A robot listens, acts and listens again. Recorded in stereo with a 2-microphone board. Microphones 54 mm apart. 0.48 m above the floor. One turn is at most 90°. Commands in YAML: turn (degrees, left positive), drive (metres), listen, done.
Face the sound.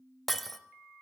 turn: 30
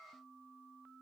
listen: true
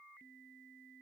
done: "I heard breaking glass, but can't make it out now. It was about 25° right or 145° left."